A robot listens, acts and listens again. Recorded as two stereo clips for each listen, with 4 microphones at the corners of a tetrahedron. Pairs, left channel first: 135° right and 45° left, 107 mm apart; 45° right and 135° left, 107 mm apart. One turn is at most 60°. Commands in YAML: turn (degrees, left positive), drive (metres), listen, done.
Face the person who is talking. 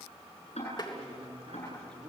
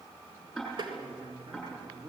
turn: 60
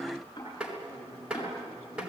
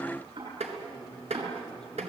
turn: 35
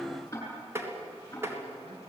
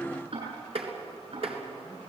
listen: true
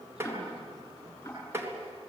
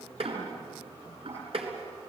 listen: true
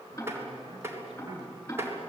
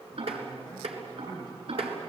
turn: 30
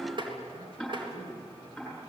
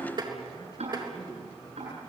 done: "Found it: a man speaking, straight ahead."